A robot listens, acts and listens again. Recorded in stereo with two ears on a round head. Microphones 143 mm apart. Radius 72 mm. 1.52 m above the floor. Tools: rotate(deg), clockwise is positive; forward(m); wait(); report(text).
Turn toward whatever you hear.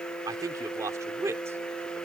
rotate(20)
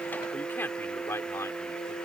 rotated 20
rotate(-15)
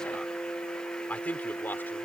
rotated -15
rotate(-10)
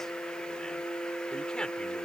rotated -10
wait()
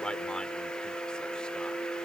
wait()
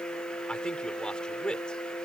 report("Found it: a man speaking, straight ahead.")